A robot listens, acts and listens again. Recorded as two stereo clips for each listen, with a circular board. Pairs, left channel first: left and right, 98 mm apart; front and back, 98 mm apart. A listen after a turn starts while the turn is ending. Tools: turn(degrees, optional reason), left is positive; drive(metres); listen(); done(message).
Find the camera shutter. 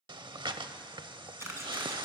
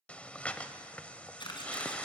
turn(degrees=-30, reason="The camera shutter: 30° right.")
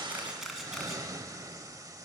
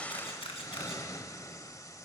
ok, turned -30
done("Facing the camera shutter.")